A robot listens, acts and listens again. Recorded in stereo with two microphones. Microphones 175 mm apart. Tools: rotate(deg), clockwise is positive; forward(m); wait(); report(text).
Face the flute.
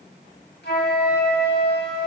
rotate(-75)
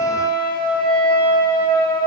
rotate(-25)
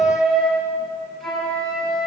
report("Found it: a flute, straight ahead, over 4 m away.")